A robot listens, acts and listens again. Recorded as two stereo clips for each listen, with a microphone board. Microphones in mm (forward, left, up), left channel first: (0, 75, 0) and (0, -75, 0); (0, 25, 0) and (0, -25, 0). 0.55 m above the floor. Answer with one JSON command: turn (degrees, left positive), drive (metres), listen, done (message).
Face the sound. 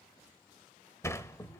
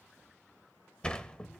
{"turn": 20}
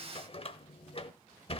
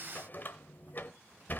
{"turn": 140}
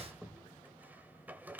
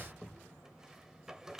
{"turn": -10}
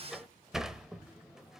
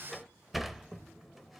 {"done": "Found it: a sliding door, straight ahead, under 1 m away."}